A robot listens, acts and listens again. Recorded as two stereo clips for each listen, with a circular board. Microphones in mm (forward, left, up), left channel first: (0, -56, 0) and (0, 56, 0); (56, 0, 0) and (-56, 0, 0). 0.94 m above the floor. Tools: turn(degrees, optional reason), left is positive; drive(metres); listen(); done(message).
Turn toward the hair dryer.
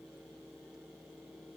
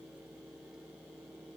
listen()
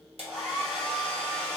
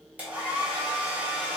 turn(degrees=105, reason="The hair dryer: 105° left.")
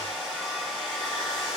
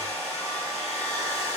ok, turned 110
done("Found it: a hair dryer, straight ahead, 1 to 2 m away.")